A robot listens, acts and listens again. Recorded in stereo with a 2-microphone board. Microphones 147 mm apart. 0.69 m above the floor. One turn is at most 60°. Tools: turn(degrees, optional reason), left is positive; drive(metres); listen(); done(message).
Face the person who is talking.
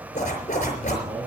turn(degrees=-40, reason="The man speaking: about 40° right or 140° right.")
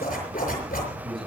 done("Facing the man speaking.")